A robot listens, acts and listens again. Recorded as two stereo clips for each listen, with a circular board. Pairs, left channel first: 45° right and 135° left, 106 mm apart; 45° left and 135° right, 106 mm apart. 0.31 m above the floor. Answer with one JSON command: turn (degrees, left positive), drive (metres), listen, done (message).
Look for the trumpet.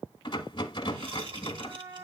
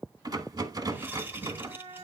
{"turn": -170}
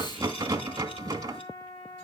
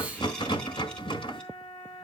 {"done": "Found it: a trumpet, straight ahead."}